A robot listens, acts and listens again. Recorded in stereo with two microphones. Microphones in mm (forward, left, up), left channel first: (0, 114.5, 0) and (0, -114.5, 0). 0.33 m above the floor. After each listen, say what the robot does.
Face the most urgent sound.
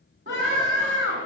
Turn 50° right.
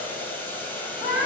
Facing the scream.